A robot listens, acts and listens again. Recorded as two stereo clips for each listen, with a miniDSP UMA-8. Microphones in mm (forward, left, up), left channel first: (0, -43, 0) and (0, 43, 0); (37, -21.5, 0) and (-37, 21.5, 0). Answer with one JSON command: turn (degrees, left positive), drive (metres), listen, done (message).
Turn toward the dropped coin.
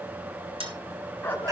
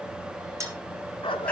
{"turn": 95}
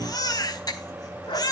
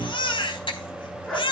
{"done": "Facing where the dropped coin came from. I can't hear it now."}